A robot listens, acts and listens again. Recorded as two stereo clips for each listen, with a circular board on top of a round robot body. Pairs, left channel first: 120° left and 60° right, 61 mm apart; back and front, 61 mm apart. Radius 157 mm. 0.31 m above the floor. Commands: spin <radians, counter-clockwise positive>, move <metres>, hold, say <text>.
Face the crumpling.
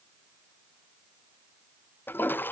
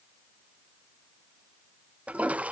hold
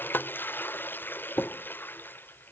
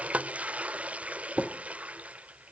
hold
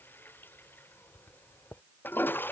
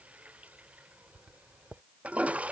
say I can't make out crumpling to turn to.